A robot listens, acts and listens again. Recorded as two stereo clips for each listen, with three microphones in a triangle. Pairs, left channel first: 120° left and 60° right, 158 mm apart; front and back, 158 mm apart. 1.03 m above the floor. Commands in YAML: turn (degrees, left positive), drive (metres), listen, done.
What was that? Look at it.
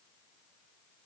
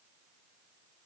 listen: true
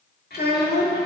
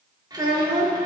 turn: 110
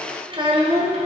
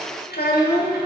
turn: -10
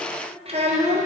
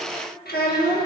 turn: -15
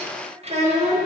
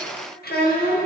turn: -15
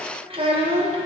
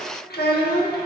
done: "Facing the child speaking, 1 to 2 m away."